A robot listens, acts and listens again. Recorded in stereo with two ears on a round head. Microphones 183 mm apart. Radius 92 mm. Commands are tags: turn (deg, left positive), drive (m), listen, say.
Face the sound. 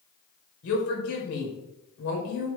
<turn deg="90"/>
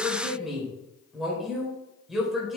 <say>Facing the woman speaking.</say>